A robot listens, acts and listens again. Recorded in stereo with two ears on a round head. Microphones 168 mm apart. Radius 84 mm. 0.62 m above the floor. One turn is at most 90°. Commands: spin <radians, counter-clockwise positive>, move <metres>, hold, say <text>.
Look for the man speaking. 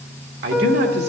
spin -1.05
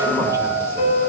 hold
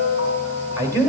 spin -0.26
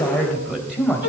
say Facing the man speaking, 2 to 4 m away.